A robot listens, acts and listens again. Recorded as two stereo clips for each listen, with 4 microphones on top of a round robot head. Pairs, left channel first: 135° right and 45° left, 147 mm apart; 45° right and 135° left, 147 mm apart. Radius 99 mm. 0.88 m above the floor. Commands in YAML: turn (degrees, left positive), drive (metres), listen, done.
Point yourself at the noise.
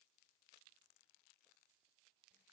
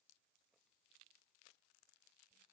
listen: true
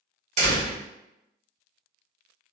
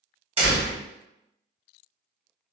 turn: 85
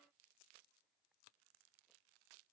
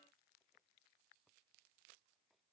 done: "I heard a door slam from this way, but can't make it out now."